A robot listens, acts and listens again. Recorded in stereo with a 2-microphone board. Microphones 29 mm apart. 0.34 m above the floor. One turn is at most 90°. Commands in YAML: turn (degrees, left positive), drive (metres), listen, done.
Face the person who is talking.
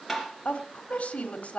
turn: 55
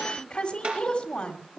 turn: 45
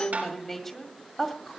turn: 10
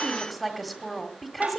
done: "Found it: a woman speaking, straight ahead, 1 to 2 m away."